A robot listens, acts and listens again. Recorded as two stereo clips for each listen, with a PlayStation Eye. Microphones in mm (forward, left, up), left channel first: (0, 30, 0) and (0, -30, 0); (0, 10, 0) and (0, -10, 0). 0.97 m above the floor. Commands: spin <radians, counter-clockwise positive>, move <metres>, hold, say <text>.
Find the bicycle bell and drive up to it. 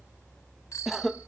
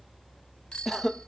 spin 1.13
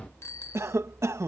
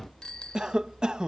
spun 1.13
spin 0.87
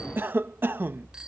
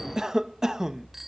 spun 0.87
hold
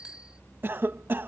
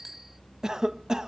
spin -0.26
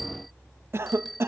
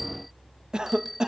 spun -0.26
move 1.0
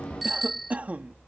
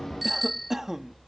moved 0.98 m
move 1.0
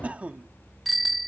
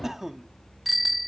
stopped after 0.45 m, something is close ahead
say I am next to the bicycle bell.